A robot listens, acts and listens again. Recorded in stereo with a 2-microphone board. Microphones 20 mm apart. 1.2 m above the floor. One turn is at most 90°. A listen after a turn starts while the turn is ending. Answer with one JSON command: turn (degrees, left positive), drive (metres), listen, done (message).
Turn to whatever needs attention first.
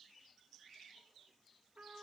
{"listen": true}
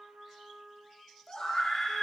{"turn": 35}
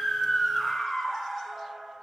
{"done": "Facing the scream."}